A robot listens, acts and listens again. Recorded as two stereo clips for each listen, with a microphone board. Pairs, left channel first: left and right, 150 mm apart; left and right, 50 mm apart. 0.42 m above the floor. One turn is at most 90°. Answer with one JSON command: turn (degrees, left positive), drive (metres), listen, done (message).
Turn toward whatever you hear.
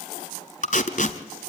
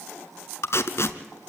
{"turn": 60}
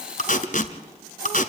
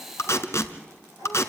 {"turn": 60}
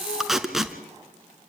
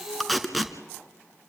{"done": "Facing the tape being pulled."}